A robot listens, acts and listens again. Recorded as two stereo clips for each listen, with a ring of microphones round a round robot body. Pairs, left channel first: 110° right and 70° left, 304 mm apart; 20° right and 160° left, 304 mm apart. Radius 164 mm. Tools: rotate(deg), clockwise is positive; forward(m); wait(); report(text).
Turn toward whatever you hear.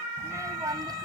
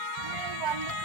rotate(-145)
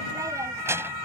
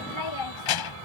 rotate(15)
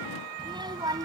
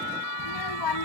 rotate(10)
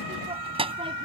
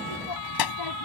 report("Found it: a child speaking, straight ahead.")